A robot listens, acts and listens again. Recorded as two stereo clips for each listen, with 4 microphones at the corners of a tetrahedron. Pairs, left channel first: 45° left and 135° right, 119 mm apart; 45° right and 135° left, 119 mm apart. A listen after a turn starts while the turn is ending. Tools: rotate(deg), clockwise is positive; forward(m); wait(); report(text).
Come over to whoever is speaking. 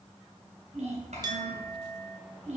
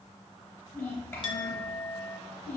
rotate(115)
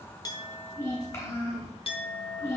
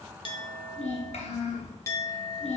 rotate(20)
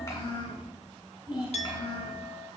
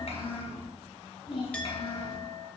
forward(1.0)
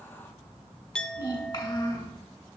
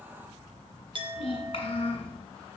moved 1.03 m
forward(1.0)
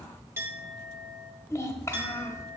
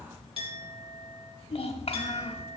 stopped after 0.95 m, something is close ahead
rotate(20)
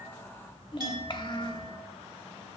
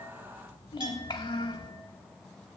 report("Arrived at the child speaking, straight ahead.")